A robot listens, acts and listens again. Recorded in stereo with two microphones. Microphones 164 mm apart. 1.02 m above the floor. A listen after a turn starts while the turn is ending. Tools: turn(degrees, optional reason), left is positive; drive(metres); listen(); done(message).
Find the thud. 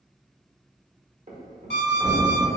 turn(degrees=-50, reason="The thud: about 50° right or 130° right.")
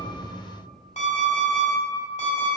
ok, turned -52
listen()
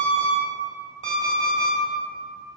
done("I heard a thud, but can't make it out now. It was about 5° left or 80° right.")